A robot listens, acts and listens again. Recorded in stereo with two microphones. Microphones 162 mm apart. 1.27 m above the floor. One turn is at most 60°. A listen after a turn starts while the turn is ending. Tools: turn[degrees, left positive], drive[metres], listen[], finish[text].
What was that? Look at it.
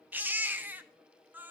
Action: turn[-30]
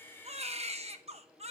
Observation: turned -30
Thought: So it is at 140° right.
Action: turn[-60]
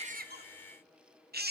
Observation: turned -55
Thought: The baby crying is now 85° right.
Action: turn[-60]
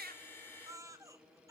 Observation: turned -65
Thought: The baby crying is now 20° right.
Action: turn[-20]
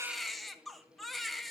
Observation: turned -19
Action: finish[Found it: a baby crying, straight ahead.]